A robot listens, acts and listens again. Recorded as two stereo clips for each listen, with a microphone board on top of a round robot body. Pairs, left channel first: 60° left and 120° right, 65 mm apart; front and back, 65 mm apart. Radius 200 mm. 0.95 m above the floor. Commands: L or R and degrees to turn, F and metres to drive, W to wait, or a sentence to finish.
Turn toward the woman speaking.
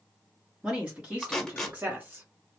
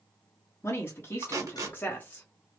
R60
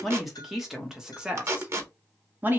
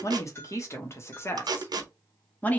R65
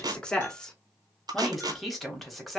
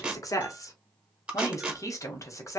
R30
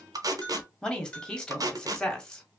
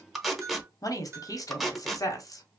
R15
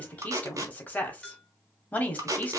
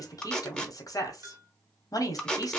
Facing the woman speaking, 1 to 2 m away.